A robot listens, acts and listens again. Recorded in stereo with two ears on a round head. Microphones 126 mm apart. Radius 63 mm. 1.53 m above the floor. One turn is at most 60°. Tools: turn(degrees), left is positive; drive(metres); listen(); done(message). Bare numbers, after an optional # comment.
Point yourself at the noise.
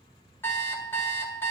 # The alarm clock: about 15° left or 165° left.
turn(15)
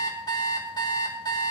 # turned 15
# So it is at 150° left.
turn(60)
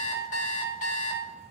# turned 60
# The alarm clock is now 85° left.
turn(60)
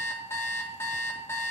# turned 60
# The alarm clock is now 20° left.
turn(20)
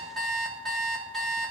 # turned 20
done("Found it: an alarm clock, straight ahead.")